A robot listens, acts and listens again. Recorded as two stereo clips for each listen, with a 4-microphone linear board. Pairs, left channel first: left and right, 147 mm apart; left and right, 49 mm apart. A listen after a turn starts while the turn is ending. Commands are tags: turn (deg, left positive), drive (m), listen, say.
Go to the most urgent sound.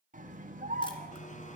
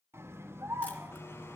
<turn deg="-65"/>
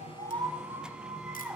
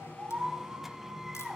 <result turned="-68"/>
<turn deg="-15"/>
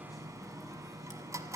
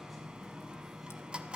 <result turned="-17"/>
<drive m="1.0"/>
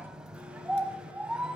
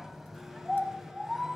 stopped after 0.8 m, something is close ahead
<say>I am next to the scream.</say>